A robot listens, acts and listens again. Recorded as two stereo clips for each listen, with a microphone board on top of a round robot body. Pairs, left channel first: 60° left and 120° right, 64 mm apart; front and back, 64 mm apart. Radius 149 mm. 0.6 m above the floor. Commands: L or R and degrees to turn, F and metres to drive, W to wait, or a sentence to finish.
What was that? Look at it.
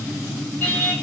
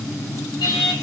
Facing the singing.